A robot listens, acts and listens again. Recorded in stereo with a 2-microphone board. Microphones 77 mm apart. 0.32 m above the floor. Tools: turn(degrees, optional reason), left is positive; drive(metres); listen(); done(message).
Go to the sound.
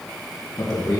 turn(degrees=70, reason="The man speaking: about 70° left or 110° left.")
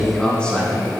turn(degrees=15, reason="So it is at 15° left.")
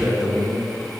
drive(metres=1.0)
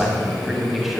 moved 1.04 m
drive(metres=1.0)
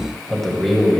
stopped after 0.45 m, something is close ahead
done("Arrived at the man speaking, straight ahead.")